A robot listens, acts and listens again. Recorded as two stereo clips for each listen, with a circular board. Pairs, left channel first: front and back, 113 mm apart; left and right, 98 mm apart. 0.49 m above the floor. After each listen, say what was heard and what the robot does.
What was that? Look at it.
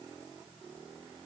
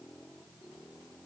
Keep listening.
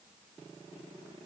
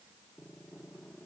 Keep listening.
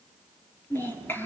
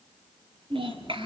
The child speaking: 70° right. Turn 70° right.
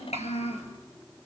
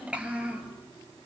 The child speaking is now 10° right. Turn 10° right.
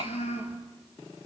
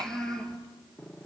The child speaking is now 10° left. Turn 10° left.
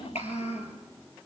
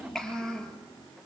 Found it: a child speaking, straight ahead, over 4 m away.